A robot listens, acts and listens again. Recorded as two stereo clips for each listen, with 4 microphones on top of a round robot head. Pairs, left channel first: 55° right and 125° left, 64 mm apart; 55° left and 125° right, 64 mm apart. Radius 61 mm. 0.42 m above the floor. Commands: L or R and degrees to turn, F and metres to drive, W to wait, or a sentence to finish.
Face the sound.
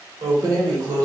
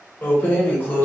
L115
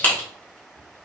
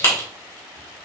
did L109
Found it: keys jangling, straight ahead, 1 to 2 m away.